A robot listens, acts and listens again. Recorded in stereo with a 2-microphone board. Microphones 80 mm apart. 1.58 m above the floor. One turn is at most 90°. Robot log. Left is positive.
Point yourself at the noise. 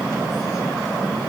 cmd idle
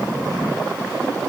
cmd idle
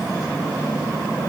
end: I can't make out anything to turn to.